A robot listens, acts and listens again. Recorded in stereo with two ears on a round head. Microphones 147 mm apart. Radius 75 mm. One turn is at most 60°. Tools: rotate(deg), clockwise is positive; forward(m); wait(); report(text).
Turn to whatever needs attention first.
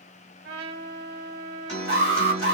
rotate(-40)
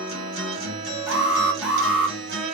report("Facing the alarm.")